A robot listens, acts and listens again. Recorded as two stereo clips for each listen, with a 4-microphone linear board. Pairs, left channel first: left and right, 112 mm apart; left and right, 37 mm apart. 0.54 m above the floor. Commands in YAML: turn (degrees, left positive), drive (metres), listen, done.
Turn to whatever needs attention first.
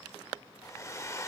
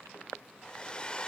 listen: true
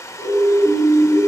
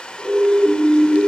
turn: -30
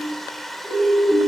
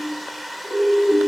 done: "Facing the siren, 2 to 4 m away."